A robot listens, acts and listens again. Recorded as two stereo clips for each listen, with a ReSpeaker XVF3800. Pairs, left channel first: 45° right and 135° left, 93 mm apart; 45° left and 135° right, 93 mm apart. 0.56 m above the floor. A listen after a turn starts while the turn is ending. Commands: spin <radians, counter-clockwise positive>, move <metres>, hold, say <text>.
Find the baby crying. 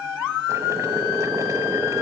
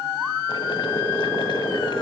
hold
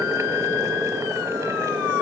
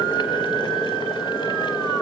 hold
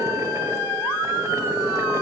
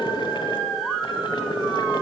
say I can't make out a baby crying to turn to.